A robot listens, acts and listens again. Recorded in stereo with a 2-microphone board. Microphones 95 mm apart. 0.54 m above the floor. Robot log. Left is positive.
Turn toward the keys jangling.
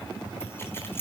note: The keys jangling: about 25° left or 155° left.
cmd yaw +25
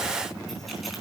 cmd idle
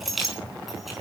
end: Found it: keys jangling, straight ahead.